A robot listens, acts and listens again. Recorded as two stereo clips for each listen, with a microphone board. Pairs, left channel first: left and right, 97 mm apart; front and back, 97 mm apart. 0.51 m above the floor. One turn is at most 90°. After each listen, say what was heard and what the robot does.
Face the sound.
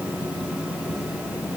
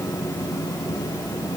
Keep listening.
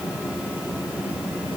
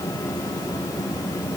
Keep listening.
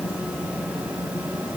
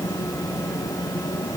I can't make out anything to turn to.